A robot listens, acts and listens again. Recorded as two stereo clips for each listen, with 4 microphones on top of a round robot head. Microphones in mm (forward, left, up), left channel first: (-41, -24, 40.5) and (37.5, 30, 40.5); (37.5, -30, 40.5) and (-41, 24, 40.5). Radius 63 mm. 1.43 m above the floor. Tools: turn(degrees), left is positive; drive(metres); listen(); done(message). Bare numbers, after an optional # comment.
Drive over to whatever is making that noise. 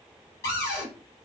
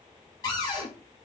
# The cupboard door: 85° right.
turn(-85)
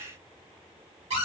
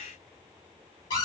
# The cupboard door is now 10° left.
turn(10)
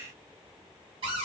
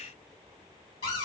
drive(1.0)
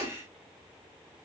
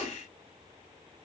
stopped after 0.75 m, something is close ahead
done("Arrived at the cupboard door, straight ahead.")